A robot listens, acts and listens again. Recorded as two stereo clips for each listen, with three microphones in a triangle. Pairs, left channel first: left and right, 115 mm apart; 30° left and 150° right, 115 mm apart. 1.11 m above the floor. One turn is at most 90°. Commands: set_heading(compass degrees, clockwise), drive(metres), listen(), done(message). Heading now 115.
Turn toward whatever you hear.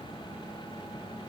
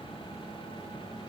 listen()
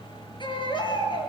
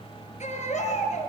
set_heading(75)
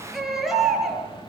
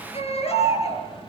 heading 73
done("Facing the baby crying.")